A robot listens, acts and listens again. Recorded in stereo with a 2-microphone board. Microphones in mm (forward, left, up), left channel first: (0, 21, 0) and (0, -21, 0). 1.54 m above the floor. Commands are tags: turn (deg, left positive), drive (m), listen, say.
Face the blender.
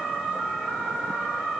<listen/>
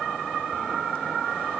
<listen/>
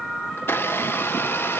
<turn deg="70"/>
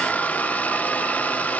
<turn deg="40"/>
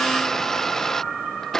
<turn deg="10"/>
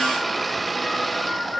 <say>Facing the blender.</say>